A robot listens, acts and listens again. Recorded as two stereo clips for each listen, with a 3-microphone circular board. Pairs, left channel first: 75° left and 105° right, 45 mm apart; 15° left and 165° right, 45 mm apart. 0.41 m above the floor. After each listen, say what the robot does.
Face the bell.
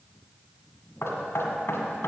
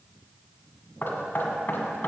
Keep listening.
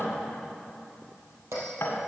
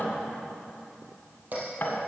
Turn 115° right.
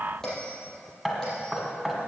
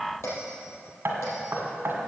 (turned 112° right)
Facing the bell, 2 to 4 m away.